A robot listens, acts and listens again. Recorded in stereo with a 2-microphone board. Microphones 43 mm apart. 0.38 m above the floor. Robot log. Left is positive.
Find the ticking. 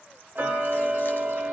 note: The ticking: about 50° right or 130° right.
cmd yaw -50
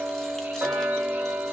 note: So it is at 80° right.
cmd yaw -80
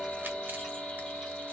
end: Found it: ticking, straight ahead, 1 to 2 m away.